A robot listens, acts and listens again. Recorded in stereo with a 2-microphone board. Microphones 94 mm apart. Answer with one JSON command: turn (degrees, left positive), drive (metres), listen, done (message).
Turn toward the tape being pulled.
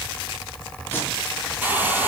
{"turn": 20}
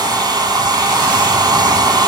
{"listen": true}
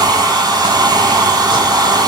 {"listen": true}
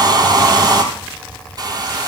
{"done": "I heard tape being pulled, but can't make it out now. It was about straight ahead or 140° left."}